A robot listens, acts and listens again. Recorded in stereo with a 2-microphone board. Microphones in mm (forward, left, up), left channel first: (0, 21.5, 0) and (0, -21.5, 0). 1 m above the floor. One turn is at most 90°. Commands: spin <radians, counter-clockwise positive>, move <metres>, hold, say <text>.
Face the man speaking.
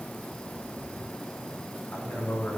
spin 0.79
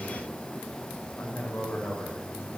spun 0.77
spin 1.57
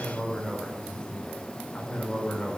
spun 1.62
spin 0.35
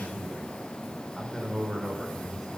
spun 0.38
say Found it: a man speaking, straight ahead.